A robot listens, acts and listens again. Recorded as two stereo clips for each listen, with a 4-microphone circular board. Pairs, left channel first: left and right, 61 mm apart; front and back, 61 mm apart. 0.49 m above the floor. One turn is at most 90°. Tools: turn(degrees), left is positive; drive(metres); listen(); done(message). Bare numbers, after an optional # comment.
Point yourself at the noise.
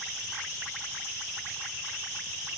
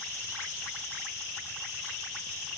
listen()
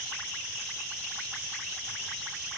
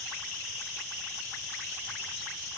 listen()
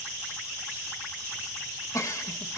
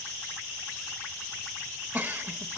# The giggle: 120° left.
turn(90)
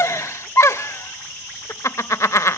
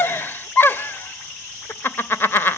# The giggle is now 55° left.
turn(55)
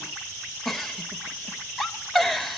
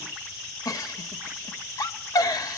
done("Facing the giggle.")